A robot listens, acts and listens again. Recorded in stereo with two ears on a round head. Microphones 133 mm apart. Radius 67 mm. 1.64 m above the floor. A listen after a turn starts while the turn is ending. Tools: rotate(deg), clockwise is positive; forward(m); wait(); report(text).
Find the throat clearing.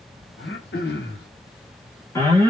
rotate(-70)
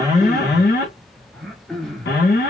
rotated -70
report("Found it: throat clearing, straight ahead, under 1 m away.")